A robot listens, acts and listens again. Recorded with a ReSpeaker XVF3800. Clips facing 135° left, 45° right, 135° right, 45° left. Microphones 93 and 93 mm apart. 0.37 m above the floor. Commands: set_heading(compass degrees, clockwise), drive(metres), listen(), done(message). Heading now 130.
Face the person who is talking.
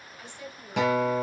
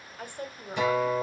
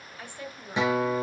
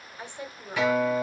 set_heading(150)
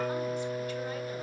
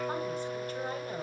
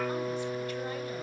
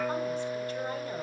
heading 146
listen()
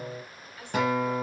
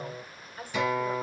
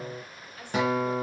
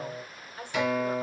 done("Facing the woman speaking.")